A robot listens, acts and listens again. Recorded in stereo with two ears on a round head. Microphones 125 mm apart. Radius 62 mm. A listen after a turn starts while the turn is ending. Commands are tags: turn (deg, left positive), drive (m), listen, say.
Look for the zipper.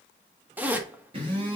<turn deg="-30"/>
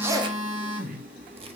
<listen/>
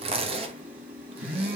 <turn deg="-135"/>
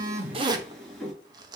<turn deg="-30"/>
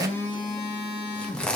<say>Facing the zipper, 1 to 2 m away.</say>